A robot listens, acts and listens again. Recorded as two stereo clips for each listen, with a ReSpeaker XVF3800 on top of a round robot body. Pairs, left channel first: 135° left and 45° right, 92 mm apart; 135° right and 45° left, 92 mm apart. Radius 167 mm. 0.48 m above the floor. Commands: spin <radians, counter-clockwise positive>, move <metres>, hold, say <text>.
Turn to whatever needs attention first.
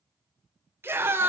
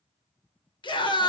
spin -1.83
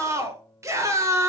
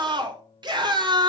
spin 0.17
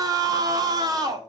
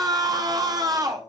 say Found it: a scream, straight ahead, 2 to 4 m away.